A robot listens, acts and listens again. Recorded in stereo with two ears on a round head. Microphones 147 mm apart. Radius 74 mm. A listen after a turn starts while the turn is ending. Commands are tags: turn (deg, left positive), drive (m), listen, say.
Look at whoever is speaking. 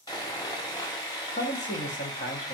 <turn deg="45"/>
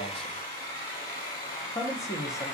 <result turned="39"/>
<turn deg="20"/>
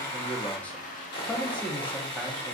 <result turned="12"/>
<turn deg="10"/>
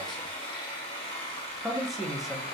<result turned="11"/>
<say>Found it: a man speaking, straight ahead, under 1 m away.</say>